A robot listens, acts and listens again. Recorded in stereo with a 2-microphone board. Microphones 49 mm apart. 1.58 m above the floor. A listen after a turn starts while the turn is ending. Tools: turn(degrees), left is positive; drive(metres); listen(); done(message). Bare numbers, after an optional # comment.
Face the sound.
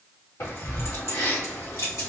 # The keys jangling: about 70° left or 110° left.
turn(70)
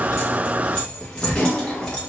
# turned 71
# So it is at 15° left.
turn(15)
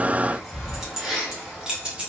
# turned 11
# The keys jangling is now 20° right.
turn(-20)
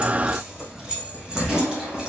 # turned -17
# The keys jangling is now 15° right.
turn(-15)
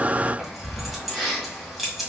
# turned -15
done("Facing the keys jangling, 1 to 2 m away.")